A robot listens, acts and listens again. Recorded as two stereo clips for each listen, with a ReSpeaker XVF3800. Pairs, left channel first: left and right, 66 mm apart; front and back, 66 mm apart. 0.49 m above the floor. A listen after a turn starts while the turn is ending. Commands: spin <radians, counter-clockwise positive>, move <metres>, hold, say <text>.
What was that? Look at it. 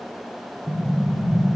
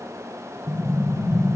spin -2.79
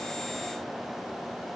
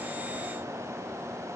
say I heard an explosion from this way, but can't make it out now.